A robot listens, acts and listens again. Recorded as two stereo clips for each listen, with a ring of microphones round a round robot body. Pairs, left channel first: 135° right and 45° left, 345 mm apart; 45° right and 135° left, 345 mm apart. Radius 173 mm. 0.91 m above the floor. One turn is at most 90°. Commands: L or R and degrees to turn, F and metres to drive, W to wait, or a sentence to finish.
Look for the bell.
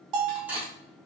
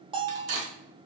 L60
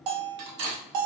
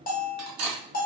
L20
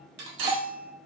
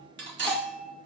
Facing the bell, under 1 m away.